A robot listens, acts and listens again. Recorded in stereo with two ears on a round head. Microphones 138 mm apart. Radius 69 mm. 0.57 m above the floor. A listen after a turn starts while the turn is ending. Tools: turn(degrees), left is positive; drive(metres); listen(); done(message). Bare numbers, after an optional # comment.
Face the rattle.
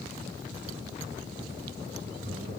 listen()
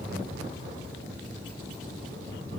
listen()
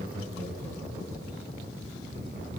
done("I can't make out a rattle, only laughter.")